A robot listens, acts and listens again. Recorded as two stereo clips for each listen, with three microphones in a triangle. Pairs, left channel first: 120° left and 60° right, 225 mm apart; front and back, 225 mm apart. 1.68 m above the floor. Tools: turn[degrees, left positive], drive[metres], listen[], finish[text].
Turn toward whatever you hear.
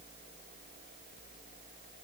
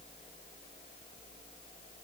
Action: listen[]
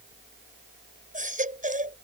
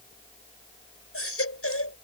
Action: finish[Facing the baby crying.]